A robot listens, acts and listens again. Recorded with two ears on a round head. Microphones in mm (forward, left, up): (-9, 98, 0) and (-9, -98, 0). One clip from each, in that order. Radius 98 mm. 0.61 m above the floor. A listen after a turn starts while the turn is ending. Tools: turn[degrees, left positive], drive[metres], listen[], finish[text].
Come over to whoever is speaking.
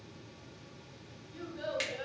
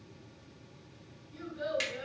Thought: The child speaking: about 35° left or 145° left.
Action: turn[35]
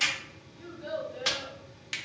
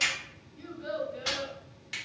Action: drive[1.0]
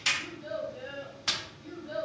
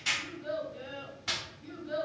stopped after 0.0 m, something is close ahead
Action: finish[Blocked. The child speaking is further on, straight ahead.]